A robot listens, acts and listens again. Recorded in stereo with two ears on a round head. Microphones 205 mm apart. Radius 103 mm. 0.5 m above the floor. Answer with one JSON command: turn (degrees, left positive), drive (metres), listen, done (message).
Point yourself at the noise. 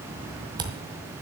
{"turn": -20}
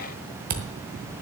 {"turn": -140}
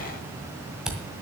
{"done": "Facing the camera shutter, 1 to 2 m away."}